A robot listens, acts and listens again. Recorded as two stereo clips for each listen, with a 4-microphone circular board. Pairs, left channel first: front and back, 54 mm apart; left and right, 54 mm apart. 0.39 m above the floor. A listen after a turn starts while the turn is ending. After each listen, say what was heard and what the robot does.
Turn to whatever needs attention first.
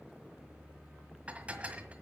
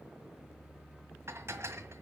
Keep listening.
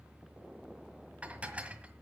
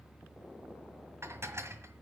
Keep listening.
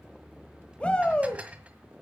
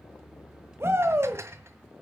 The shout: 65° right. Turn 65° right.
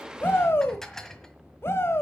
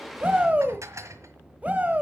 The shout is now 30° right. Turn 30° right.
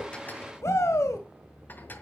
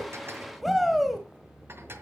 Found it: a shout, straight ahead.